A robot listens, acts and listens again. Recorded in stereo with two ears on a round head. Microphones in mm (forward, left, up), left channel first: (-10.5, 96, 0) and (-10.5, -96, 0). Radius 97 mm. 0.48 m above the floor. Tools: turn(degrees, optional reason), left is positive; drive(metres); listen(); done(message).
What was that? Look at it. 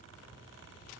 listen()
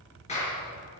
turn(degrees=35, reason="The clap: about 35° left or 145° left.")
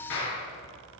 turn(degrees=110, reason="So it is at 110° left.")
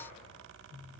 listen()
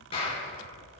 turn(degrees=25, reason="The clap is now 25° left.")
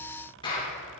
turn(degrees=25, reason="The clap is now 25° left.")
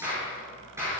turn(degrees=-10, reason="The clap is now 10° right.")
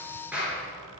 done("Facing the clap, over 4 m away.")